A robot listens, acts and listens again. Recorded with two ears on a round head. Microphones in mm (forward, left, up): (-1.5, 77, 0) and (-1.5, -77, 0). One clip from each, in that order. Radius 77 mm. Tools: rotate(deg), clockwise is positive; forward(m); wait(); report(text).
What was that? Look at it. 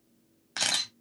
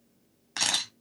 rotate(-30)
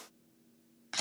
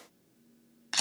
rotate(30)
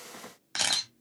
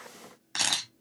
report("Facing the camera shutter, 1 to 2 m away.")